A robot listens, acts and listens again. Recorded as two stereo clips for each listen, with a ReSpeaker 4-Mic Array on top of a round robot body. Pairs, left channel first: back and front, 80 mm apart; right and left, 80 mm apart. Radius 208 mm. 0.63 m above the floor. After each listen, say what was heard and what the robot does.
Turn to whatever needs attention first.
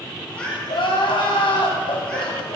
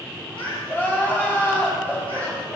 The crying: 160° right. Turn 160° right.
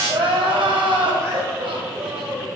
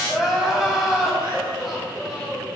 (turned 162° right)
Found it: crying, straight ahead, 2 to 4 m away.